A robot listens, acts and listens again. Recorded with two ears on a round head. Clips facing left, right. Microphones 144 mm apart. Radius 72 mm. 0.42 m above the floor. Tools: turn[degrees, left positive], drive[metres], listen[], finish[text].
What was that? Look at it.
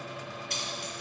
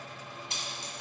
Thought: The keys jangling: about 20° right or 160° right.
Action: turn[-20]
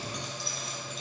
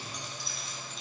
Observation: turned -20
Action: listen[]
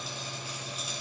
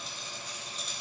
Action: finish[Found it: keys jangling, straight ahead.]